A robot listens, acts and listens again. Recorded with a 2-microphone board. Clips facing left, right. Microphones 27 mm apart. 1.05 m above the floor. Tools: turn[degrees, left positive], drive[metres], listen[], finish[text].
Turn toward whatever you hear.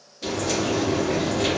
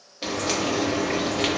Thought: The frying: about 40° right or 140° right.
Action: turn[-40]
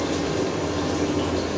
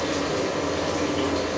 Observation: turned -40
Thought: So it is at 90° right.
Action: turn[-90]
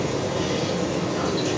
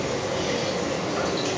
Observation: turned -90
Thought: The frying is now 30° right.
Action: turn[-30]
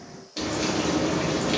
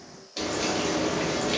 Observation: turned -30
Action: finish[Facing the frying, 1 to 2 m away.]